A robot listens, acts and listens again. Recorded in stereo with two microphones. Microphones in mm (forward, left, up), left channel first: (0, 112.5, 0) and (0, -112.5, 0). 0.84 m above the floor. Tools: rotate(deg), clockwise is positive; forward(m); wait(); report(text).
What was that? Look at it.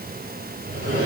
rotate(50)
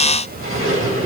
rotate(80)
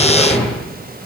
report("Found it: a sliding door, straight ahead, over 4 m away.")